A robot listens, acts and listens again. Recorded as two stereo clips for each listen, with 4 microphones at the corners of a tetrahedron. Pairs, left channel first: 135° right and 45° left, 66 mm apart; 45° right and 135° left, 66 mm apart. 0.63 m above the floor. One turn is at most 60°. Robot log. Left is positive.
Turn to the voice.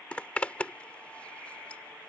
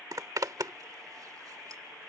cmd idle
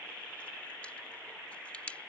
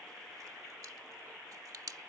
cmd idle
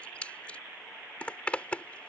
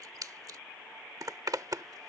end: I can't make out anyone speaking to turn to.